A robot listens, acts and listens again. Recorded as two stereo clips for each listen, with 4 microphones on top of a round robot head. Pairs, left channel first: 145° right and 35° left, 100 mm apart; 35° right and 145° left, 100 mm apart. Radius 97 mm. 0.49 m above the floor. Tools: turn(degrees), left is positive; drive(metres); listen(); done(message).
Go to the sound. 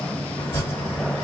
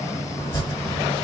turn(degrees=-75)
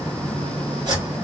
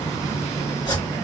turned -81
drive(metres=1.0)
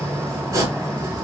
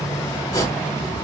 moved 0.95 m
drive(metres=1.0)
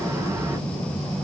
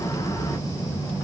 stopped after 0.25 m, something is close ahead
listen()
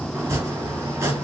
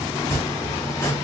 done("I am next to the chopping.")